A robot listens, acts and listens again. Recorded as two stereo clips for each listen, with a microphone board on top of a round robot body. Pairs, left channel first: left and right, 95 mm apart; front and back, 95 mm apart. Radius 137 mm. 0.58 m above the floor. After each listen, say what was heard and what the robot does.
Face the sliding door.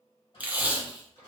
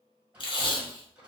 The sliding door: 105° left. Turn 105° left.
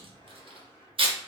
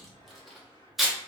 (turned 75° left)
The sliding door is now 30° left. Turn 30° left.
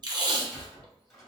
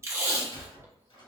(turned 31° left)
Facing the sliding door.